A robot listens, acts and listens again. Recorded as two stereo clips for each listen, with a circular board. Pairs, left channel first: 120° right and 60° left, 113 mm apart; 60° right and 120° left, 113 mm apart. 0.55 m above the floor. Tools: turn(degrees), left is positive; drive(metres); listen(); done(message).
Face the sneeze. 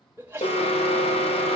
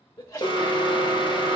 turn(degrees=-10)
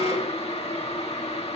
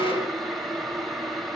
done("Facing where the sneeze came from. I can't hear it now.")